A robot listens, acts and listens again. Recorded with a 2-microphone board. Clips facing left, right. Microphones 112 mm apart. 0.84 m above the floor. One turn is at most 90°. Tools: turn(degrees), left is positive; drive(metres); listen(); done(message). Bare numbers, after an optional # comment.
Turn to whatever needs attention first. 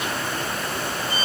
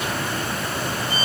listen()
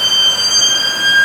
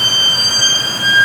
listen()
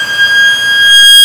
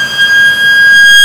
done("I can't make out anything urgent to turn to.")